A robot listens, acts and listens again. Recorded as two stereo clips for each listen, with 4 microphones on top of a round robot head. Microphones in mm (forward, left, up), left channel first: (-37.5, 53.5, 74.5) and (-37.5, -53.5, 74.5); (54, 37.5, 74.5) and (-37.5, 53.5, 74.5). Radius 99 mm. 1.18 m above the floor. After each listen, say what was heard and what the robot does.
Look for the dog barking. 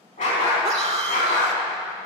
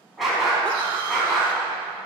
The dog barking: 75° left. Turn 75° left.
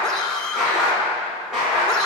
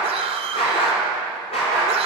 Found it: a dog barking, straight ahead.